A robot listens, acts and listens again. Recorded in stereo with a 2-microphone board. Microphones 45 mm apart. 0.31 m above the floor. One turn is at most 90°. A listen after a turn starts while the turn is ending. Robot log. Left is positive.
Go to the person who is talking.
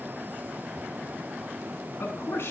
note: The man speaking: about 65° left or 115° left.
cmd yaw +65
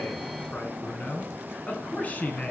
note: So it is at 40° left.
cmd yaw +40
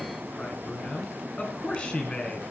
note: The man speaking is now 30° left.
cmd yaw +30
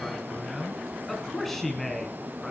cmd fwd 1.0
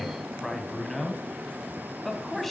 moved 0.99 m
cmd fwd 1.0
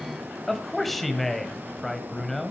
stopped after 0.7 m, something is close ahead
end: I am next to the man speaking.